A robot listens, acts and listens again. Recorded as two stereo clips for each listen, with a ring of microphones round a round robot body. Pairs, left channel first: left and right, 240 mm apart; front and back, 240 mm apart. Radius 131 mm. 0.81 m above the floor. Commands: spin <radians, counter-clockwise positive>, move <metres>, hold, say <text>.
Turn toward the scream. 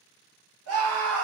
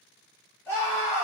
spin -1.40
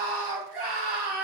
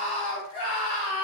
say Facing the scream.